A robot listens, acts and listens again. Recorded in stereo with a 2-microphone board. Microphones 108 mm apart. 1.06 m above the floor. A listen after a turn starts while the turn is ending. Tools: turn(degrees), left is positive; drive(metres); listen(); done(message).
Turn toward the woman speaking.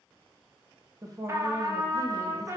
turn(degrees=-35)
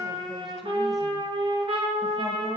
listen()
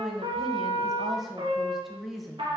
done("Facing the woman speaking.")